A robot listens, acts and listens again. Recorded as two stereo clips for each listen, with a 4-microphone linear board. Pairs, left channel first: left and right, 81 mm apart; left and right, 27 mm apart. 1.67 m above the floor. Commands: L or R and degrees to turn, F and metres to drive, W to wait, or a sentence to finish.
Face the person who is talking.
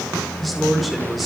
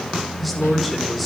R30
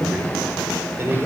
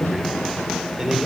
R145
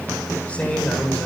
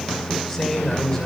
L20
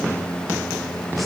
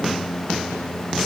W
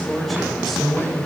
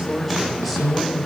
Found it: a man speaking, straight ahead, over 4 m away.